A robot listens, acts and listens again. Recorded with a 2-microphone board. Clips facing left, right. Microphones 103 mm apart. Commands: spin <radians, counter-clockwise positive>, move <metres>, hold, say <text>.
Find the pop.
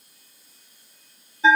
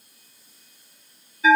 hold
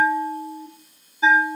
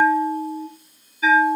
hold
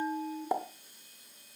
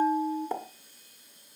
spin 0.52
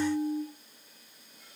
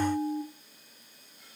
hold
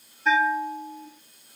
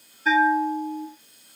say I heard a pop, but can't make it out now. It was about 20° right or 140° left.